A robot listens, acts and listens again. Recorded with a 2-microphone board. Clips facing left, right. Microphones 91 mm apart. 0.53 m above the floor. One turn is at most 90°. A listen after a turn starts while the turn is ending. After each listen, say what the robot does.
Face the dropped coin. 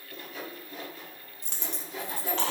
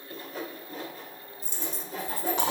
Turn 75° left.
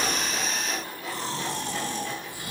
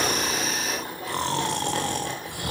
Keep listening.
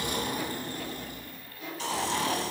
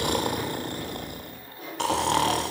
I heard a dropped coin, but can't make it out now. It was about straight ahead or 30° left.